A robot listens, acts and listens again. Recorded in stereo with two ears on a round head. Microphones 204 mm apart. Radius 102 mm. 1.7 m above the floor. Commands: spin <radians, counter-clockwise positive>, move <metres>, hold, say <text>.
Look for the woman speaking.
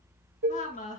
spin 0.61
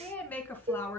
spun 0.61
spin 0.17
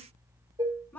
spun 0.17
spin 0.17
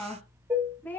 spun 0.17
spin 0.17
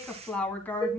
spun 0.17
spin 0.17
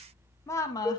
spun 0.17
spin 0.26
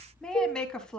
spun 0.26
say Found it: a woman speaking, straight ahead, 1 to 2 m away.